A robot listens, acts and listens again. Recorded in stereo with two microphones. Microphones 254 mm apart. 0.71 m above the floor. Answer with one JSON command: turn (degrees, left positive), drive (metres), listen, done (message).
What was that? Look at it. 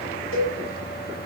{"turn": 60}
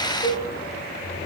{"turn": 60}
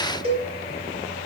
{"turn": -25}
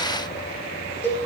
{"turn": 10}
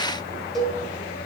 {"done": "Facing the cowbell, 2 to 4 m away."}